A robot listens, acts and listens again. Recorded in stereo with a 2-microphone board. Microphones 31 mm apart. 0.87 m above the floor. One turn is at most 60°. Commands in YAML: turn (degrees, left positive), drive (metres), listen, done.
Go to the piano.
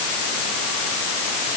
listen: true
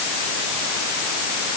listen: true
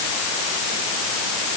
done: "I can't make out a piano to turn to."